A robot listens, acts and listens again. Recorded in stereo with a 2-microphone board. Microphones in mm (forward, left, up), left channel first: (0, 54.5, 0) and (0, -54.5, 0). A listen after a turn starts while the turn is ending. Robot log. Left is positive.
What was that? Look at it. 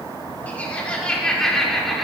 cmd yaw +30
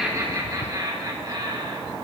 note: So it is at 40° right.
cmd yaw -40
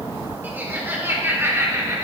note: The laughter is now 30° right.
cmd yaw -30
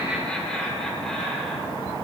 end: Found it: laughter, straight ahead.